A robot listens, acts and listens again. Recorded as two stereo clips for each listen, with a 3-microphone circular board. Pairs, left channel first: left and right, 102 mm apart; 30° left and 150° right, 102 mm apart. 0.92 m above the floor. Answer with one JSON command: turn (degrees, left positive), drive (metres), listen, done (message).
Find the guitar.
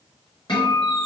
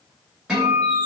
{"turn": 125}
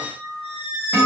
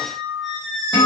{"turn": -10}
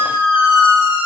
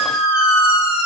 {"done": "Found it: a guitar, straight ahead."}